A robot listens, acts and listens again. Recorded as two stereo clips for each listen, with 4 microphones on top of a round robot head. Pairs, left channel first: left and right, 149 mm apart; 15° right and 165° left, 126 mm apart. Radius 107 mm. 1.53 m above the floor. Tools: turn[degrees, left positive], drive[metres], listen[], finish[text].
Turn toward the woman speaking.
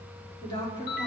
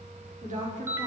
Thought: The woman speaking: 155° left.
Action: turn[155]
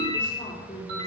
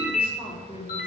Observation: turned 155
Thought: The woman speaking is now 30° left.
Action: turn[30]
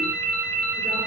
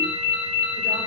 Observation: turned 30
Action: listen[]
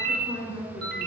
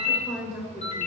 Thought: The woman speaking is now 10° right.
Action: turn[-10]
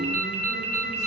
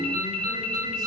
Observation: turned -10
Action: listen[]
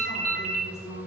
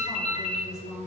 Action: finish[Found it: a woman speaking, straight ahead, over 4 m away.]